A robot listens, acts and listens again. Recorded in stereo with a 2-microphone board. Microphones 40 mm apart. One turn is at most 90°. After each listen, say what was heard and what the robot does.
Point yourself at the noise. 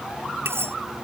Turn 90° right.
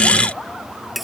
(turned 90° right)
Facing the cutlery clinking.